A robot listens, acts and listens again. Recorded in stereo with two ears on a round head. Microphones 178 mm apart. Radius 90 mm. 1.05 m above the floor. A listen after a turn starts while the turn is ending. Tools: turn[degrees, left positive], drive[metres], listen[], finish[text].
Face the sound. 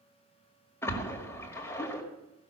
Action: turn[30]
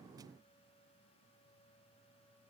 Action: listen[]
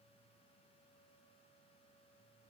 Action: finish[I heard a splash, but can't make it out now. It was about 15° right or 135° left.]